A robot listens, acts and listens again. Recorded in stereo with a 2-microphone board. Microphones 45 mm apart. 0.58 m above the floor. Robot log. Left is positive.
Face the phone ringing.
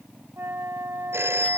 note: The phone ringing: about 70° right or 110° right.
cmd yaw -70
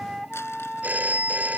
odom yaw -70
note: So it is at 40° right.
cmd yaw -40
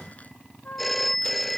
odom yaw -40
end: Found it: a phone ringing, straight ahead.